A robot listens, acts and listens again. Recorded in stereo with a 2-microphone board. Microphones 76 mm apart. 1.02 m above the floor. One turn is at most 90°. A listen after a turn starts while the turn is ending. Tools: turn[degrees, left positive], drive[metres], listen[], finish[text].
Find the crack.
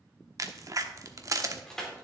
Thought: The crack: about 45° right or 135° right.
Action: turn[-45]
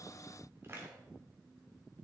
Action: listen[]
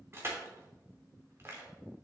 Action: finish[I heard a crack, but can't make it out now. It was about straight ahead or 90° right.]